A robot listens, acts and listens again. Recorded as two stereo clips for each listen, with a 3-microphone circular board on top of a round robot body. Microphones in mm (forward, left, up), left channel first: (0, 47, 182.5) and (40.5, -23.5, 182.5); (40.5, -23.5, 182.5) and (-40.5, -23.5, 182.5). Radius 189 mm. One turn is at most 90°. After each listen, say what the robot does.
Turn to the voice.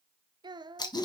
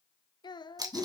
Turn 30° right.
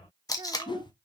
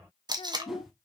Keep listening.
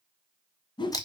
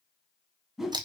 Keep listening.
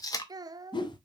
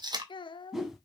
Turn 20° right.
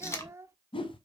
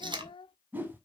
Facing the child speaking, under 1 m away.